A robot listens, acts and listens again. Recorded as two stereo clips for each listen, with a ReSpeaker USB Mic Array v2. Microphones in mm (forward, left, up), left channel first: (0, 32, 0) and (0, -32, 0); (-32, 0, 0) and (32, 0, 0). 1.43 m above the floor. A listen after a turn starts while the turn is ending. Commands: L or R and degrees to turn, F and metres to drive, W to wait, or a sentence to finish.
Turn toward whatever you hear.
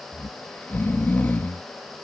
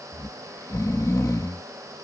L150
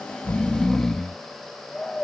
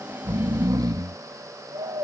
L10
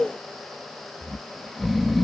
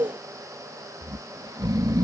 Found it: snoring, straight ahead.